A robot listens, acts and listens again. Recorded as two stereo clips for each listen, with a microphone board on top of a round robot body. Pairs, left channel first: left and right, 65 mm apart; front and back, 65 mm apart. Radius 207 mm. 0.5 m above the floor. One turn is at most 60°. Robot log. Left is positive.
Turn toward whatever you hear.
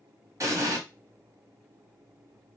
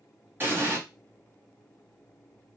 note: The explosion: 125° right.
cmd yaw -60
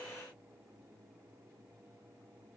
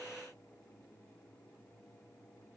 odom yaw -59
note: Nothing new. It was at 65° right.
cmd yaw -60
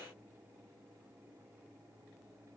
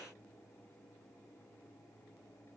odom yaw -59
note: Nothing new. It was at 10° right.
cmd yaw -10
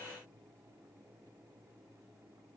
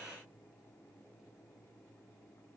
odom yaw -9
end: I heard an explosion from this way, but can't make it out now.